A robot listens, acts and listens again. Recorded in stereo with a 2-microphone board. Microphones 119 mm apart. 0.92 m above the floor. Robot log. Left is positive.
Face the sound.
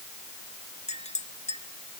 note: The clink: about 75° left or 105° left.
cmd yaw +75
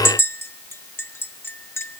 note: So it is at 20° left.
cmd yaw +20
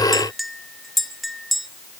end: Facing the clink, under 1 m away.